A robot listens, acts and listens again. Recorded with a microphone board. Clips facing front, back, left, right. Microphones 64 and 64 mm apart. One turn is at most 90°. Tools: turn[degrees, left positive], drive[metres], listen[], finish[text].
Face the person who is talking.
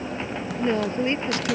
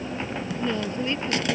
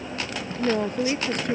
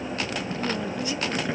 Thought: The woman speaking: 60° left.
Action: turn[60]
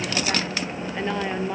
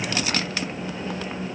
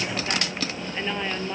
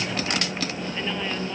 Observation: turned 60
Thought: The woman speaking is now 20° left.
Action: turn[20]
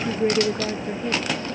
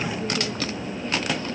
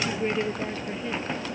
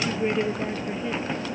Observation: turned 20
Action: finish[Found it: a woman speaking, straight ahead.]